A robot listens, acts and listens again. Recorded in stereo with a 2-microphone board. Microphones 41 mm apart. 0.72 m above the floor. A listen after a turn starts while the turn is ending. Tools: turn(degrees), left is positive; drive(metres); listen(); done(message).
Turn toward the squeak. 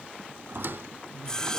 turn(degrees=-65)
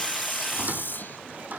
listen()
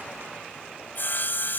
listen()
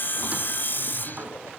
done("I heard a squeak, but can't make it out now. It was about straight ahead or 50° right.")